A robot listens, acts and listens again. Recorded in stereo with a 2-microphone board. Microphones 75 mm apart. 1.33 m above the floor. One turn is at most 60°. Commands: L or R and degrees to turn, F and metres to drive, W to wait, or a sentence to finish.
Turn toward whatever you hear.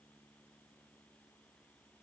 W
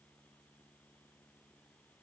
W
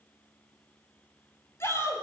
L40
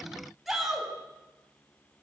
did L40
Facing the shout.